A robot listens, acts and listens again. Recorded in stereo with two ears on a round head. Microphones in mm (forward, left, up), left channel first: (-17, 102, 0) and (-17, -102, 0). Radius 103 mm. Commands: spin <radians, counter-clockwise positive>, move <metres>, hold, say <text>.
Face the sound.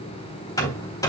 spin 0.26
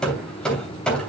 say Found it: hammering, straight ahead.